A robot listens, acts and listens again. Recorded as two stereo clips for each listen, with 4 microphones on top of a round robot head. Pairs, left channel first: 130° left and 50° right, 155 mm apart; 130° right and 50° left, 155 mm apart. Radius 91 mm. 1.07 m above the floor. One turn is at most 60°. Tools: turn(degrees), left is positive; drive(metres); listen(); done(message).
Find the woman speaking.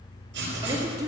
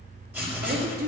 turn(degrees=20)
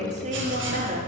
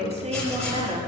turn(degrees=-10)
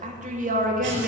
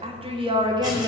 turn(degrees=-20)
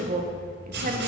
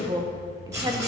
turn(degrees=-20)
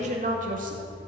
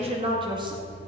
turn(degrees=-15)
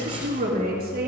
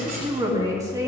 turn(degrees=-20)
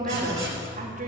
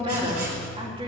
turn(degrees=-10)
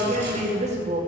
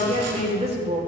done("Facing the woman speaking.")